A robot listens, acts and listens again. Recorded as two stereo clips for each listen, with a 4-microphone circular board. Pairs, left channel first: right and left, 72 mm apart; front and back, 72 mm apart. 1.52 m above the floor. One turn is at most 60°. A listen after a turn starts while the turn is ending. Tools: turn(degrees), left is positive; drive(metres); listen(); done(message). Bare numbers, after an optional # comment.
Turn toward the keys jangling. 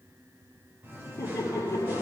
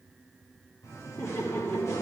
listen()
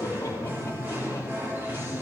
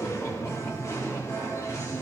listen()
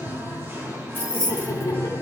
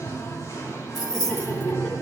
# The keys jangling: 30° left.
turn(30)
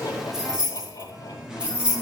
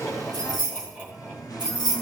# The keys jangling is now 15° left.
turn(15)
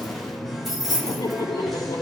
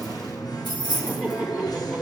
done("Found it: keys jangling, straight ahead, 2 to 4 m away.")